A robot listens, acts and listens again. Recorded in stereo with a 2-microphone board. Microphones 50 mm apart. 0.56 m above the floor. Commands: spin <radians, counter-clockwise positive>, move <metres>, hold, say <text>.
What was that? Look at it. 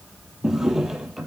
spin -0.52
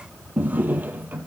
spin -2.53
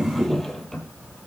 say Found it: a drawer, straight ahead.